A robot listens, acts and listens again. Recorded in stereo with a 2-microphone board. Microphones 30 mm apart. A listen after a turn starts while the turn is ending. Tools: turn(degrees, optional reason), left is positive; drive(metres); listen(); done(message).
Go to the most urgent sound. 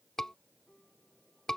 turn(degrees=30)
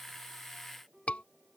turn(degrees=135, reason="So it is at 135° left.")
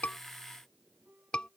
turn(degrees=35, reason="The scream is now 35° left.")
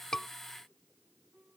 listen()
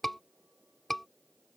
turn(degrees=10, reason="The scream is now 10° left.")
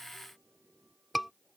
drive(metres=1.0)
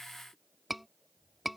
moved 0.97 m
drive(metres=1.0)
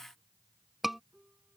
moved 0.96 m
drive(metres=1.0)
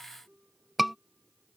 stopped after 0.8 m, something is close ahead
done("Arrived at the scream, straight ahead.")